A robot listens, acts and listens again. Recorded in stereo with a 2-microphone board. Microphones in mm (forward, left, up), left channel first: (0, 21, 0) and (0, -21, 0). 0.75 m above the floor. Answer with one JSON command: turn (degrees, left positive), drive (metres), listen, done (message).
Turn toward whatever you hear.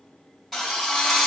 {"turn": 30}
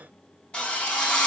{"turn": 155}
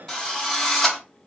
{"turn": 20}
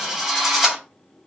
{"done": "Facing the drill."}